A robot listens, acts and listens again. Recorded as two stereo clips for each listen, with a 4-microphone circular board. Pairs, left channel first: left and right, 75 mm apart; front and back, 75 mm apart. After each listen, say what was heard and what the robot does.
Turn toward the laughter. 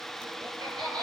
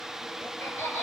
The laughter: 65° right. Turn 65° right.
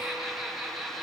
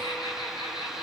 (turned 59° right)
Facing the laughter, over 4 m away.